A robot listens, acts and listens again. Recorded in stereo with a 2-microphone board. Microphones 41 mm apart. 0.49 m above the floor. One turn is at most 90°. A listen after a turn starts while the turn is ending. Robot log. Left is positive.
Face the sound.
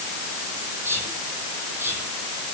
note: The whispering: about 70° right or 110° right.
cmd yaw -70
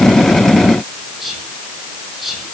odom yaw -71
end: Found it: whispering, straight ahead.